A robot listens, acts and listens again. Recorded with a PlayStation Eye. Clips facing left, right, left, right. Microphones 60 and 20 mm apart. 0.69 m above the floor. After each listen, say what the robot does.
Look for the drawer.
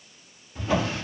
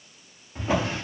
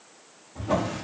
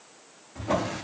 Turn 20° right.
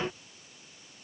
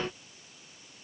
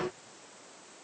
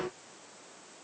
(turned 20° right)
Keep listening.
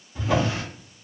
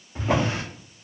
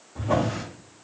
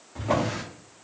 Turn 140° right.
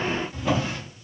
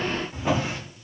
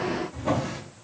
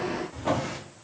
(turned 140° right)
Turn 25° right.
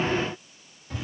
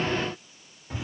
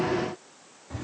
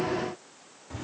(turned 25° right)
Turn 20° right.
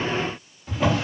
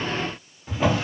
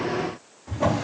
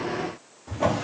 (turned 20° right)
Found it: a drawer, straight ahead.